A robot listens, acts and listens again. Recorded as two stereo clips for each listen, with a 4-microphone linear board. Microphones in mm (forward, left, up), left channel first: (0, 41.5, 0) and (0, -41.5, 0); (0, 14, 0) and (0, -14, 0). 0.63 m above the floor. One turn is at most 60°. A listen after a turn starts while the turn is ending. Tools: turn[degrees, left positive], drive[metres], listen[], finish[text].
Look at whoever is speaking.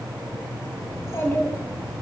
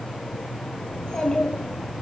Thought: The child speaking: about 30° left or 150° left.
Action: turn[30]
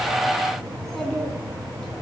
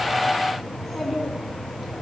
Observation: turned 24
Action: finish[Found it: a child speaking, straight ahead.]